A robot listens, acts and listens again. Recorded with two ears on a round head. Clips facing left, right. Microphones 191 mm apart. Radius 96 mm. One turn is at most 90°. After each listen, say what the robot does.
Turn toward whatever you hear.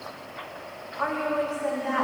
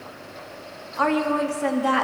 Turn 90° right.
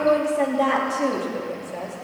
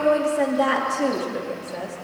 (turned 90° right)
Turn 10° right.
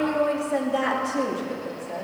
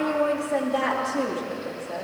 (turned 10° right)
Found it: a woman speaking, straight ahead, 2 to 4 m away.